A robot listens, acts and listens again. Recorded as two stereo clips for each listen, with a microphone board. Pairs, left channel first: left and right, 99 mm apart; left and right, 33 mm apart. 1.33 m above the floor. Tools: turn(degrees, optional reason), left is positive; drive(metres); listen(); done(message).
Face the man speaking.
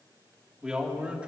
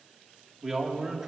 turn(degrees=-30)
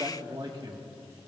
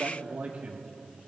turn(degrees=-130, reason="So it is at 130° right.")
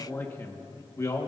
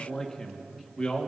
turn(degrees=35, reason="The man speaking is now 35° left.")
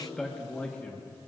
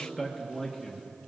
turn(degrees=15, reason="The man speaking is now 15° left.")
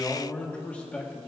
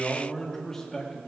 turn(degrees=15, reason="The man speaking is now 15° left.")
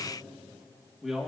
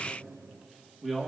done("Found it: a man speaking, straight ahead, 1 to 2 m away.")